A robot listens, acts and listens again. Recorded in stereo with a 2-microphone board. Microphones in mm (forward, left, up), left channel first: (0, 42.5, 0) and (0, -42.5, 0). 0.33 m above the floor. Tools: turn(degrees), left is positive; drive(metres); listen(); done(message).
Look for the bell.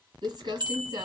turn(degrees=-60)
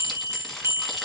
turn(degrees=-35)
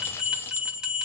turn(degrees=-10)
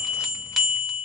done("Found it: a bell, straight ahead.")